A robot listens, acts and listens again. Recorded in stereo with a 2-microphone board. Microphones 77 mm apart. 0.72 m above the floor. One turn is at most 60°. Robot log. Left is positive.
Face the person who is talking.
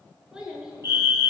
cmd yaw -30
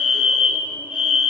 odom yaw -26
cmd idle
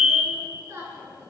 note: So it is at 145° right.
cmd yaw -60
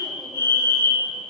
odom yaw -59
note: Nothing new. It was at 85° right.
cmd yaw -60
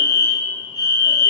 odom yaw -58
note: Nothing new. It was at 25° right.
cmd yaw -25
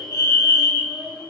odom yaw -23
end: Facing the child speaking.